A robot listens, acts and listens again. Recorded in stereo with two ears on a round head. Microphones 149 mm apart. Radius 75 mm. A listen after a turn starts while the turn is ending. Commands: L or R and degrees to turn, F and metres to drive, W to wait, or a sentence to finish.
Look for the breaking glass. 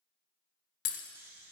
L90
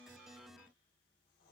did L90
I heard breaking glass from this way, but can't make it out now.